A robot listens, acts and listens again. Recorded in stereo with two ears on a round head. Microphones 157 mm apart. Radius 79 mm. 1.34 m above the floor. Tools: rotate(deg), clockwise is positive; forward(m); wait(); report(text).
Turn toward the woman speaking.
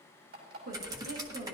rotate(70)
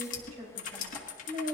rotate(30)
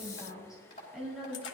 report("Found it: a woman speaking, straight ahead.")